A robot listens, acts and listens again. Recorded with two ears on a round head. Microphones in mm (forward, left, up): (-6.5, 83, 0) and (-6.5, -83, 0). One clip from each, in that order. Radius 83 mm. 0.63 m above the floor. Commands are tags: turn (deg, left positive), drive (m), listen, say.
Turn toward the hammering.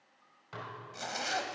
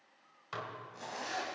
<listen/>
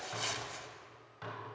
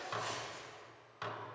<listen/>
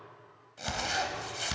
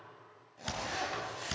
<turn deg="30"/>
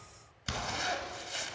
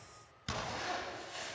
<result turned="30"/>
<turn deg="150"/>
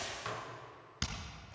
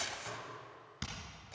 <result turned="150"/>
<turn deg="25"/>
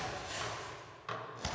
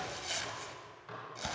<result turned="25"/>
<say>Found it: hammering, straight ahead, 2 to 4 m away.</say>